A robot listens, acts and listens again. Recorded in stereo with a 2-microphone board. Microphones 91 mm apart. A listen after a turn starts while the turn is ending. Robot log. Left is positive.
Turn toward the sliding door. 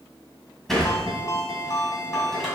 cmd yaw +30
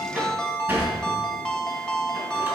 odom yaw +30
note: So it is at 25° right.
cmd yaw -25
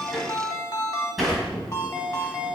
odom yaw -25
end: Found it: a sliding door, straight ahead.